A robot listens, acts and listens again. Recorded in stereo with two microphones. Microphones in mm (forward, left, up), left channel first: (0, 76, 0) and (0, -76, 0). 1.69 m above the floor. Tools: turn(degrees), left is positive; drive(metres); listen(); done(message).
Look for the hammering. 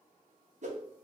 listen()
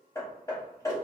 turn(degrees=20)
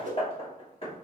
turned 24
turn(degrees=135)
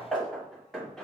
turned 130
done("Facing the hammering.")